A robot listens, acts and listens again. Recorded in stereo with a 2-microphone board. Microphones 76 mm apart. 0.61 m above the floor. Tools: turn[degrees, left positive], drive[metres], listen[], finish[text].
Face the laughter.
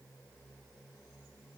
Action: listen[]
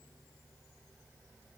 Action: listen[]
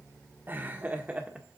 Thought: The laughter: about 15° right or 165° right.
Action: turn[-15]
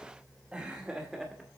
Action: turn[-30]
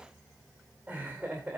Thought: The laughter: about 20° right or 160° right.
Action: turn[-20]
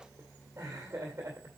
Thought: So it is at 140° right.
Action: turn[-140]
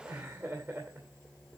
Thought: The laughter is now 35° right.
Action: turn[-35]
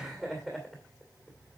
Action: finish[Facing the laughter.]